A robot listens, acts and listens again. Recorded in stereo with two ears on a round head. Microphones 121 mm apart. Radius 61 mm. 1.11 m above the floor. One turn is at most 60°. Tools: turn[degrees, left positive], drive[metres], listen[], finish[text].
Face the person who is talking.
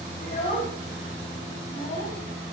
Thought: The child speaking: about 50° left or 130° left.
Action: turn[50]
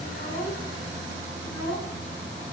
Thought: So it is at 80° left.
Action: turn[60]
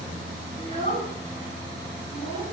Thought: The child speaking is now 35° left.
Action: turn[35]
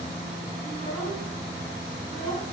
Thought: The child speaking is now 20° left.
Action: turn[20]
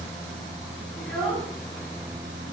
Action: finish[Facing the child speaking.]